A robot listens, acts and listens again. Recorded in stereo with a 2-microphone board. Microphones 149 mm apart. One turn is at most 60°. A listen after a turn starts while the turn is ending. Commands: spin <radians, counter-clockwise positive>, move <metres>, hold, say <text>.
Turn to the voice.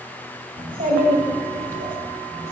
spin -1.05
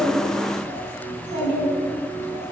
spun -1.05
spin -1.05
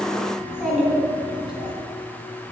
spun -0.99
say Facing the child speaking, over 4 m away.